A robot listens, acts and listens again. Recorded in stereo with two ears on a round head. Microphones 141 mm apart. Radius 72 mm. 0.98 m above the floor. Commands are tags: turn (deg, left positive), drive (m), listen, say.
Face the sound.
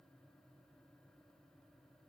<listen/>
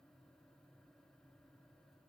<listen/>
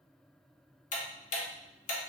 <turn deg="55"/>
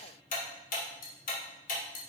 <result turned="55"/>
<turn deg="65"/>
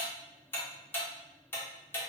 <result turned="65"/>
<turn deg="15"/>
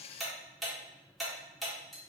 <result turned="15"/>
<say>Facing the ticking, under 1 m away.</say>